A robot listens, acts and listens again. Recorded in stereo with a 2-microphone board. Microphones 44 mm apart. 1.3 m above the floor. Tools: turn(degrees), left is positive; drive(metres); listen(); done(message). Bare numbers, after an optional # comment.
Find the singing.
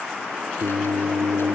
# The singing: about 70° right or 110° right.
turn(-70)
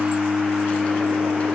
done("Found it: singing, straight ahead.")